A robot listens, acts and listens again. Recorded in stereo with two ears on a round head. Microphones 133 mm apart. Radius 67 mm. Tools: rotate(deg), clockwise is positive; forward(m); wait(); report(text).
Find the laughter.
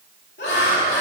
rotate(-90)
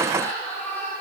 rotate(-15)
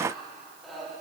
report("Found it: laughter, straight ahead.")